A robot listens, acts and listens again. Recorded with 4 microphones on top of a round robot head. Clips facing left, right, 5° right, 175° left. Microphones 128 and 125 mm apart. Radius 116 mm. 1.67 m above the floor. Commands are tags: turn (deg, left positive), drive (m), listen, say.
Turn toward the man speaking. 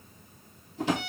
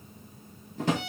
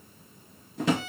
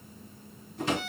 <listen/>
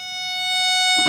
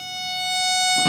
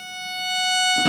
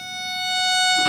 <listen/>
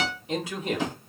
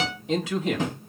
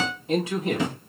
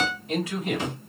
<turn deg="-75"/>
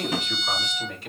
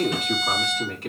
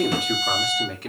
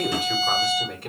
<turn deg="-40"/>
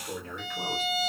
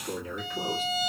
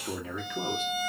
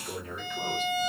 <turn deg="-15"/>
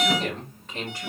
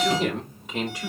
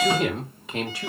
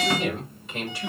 <turn deg="-10"/>
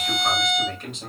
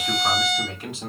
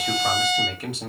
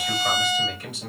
<say>Facing the man speaking.</say>